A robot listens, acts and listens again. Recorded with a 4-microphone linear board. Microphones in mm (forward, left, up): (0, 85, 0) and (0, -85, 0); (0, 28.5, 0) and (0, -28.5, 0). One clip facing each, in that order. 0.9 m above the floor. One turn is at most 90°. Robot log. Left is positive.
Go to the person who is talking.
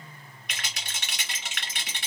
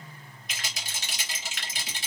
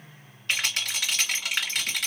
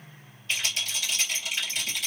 cmd idle
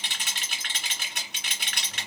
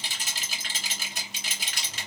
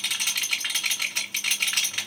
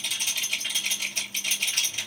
cmd idle
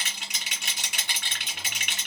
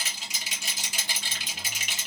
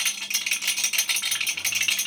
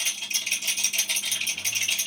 end: I can't make out anyone speaking, only a rattle.